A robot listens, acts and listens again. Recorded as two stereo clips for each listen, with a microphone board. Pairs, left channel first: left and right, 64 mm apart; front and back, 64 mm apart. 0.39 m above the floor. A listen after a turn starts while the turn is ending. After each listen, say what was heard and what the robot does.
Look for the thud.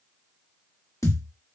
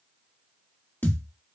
The thud: 60° left. Turn 60° left.
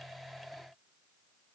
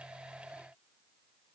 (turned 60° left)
Facing where the thud came from. I can't hear it now.